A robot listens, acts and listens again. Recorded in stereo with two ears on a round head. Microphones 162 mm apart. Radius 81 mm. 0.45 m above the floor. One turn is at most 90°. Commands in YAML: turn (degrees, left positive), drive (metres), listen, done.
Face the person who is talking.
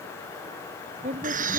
turn: -40
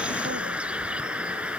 listen: true
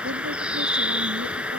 listen: true
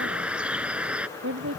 turn: -90
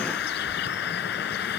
turn: -10
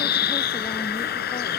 listen: true
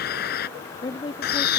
turn: 25
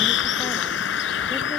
listen: true
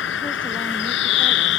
listen: true
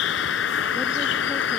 done: "I heard a woman speaking from this way, but can't make it out now."